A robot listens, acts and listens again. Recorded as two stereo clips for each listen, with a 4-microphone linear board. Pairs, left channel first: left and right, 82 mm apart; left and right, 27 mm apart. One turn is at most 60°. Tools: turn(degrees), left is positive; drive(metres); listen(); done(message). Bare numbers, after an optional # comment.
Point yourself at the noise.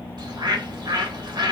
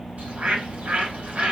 # The bird: about 60° right or 120° right.
turn(-60)
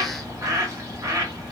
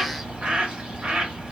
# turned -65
# So it is at 45° right.
turn(-45)
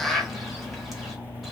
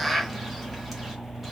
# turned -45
done("Facing the bird.")